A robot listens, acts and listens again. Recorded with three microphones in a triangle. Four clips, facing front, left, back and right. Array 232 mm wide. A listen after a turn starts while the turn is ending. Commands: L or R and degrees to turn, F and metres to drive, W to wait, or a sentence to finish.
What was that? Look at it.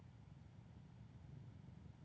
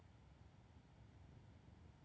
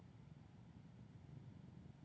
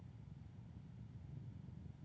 W
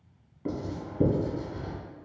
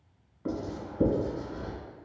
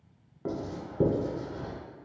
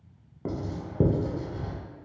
R105
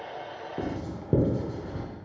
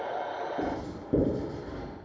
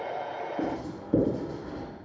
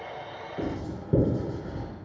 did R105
Found it: writing, straight ahead, under 1 m away.